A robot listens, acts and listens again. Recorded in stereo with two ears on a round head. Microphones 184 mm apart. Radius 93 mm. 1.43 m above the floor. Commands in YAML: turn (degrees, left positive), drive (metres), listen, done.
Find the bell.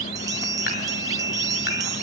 turn: -15
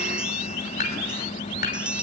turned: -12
done: "Found it: a bell, straight ahead, under 1 m away."